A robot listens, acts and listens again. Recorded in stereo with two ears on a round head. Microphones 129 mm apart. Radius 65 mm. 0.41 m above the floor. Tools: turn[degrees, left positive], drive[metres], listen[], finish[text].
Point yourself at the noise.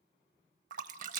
Thought: The splash: about 60° right or 120° right.
Action: turn[-60]
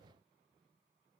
Action: listen[]
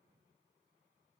Action: finish[I heard a splash, but can't make it out now. It was about straight ahead or 60° right.]